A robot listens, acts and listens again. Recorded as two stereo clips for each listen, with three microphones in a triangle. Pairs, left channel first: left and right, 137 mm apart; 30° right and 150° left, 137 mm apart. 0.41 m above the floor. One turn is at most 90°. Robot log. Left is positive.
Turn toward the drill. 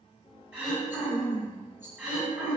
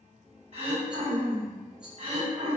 cmd idle
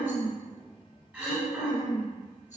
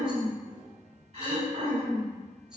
cmd idle
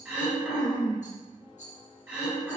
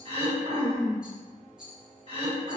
end: I can't make out a drill, only a rattle and throat clearing.